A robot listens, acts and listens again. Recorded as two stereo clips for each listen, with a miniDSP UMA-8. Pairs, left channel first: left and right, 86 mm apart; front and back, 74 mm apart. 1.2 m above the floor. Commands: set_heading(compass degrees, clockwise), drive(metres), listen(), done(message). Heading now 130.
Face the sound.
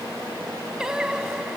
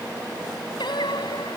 done("Found it: singing, straight ahead.")